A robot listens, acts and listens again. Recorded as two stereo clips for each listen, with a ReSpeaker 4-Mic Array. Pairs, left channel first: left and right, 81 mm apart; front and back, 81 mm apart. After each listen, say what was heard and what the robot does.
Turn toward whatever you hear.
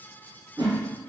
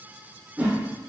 The whoosh: 100° right. Turn 100° right.
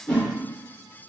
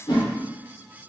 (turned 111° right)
The whoosh is now 10° left. Turn 10° left.
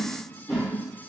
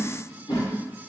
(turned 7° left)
Found it: a whoosh, straight ahead.